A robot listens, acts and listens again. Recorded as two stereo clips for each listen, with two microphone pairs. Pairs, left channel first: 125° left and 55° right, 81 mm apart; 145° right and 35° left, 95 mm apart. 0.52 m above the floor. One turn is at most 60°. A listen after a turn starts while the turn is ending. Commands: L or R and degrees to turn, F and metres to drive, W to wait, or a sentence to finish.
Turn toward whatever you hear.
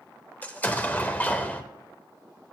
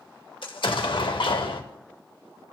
R60
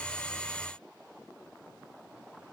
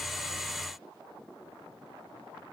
R60
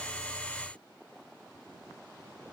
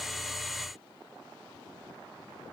R50
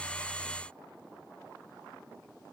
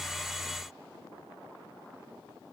Facing where the explosion came from. I can't hear it now.